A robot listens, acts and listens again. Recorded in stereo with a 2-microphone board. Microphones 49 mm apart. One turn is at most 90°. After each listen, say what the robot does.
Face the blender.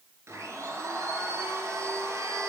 Turn 70° right.
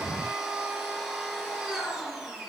Facing the blender, over 4 m away.